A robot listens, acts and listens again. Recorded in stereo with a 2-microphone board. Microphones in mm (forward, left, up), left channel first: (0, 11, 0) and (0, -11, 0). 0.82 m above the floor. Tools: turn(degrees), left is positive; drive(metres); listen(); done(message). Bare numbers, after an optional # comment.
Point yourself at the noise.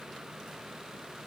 listen()
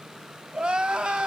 # The crying: about 50° right or 130° right.
turn(-50)
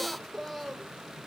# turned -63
done("Facing the crying, 1 to 2 m away.")